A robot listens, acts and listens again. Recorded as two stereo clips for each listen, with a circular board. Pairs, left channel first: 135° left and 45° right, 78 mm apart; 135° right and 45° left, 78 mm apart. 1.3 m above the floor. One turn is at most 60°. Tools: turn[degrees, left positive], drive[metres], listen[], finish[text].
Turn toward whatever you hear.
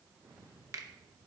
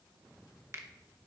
Action: finish[Found it: a finger snap, straight ahead.]